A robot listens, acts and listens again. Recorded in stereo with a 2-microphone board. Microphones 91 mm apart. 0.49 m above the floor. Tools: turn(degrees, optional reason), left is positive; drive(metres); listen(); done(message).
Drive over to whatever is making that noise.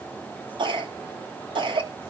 turn(degrees=-65, reason="The cough: about 65° right or 115° right.")
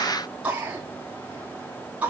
turn(degrees=-20, reason="So it is at 20° right.")
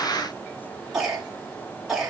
drive(metres=1.0)
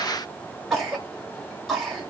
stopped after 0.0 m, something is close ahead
done("Something is in my way. I am facing the cough but have not reached it.")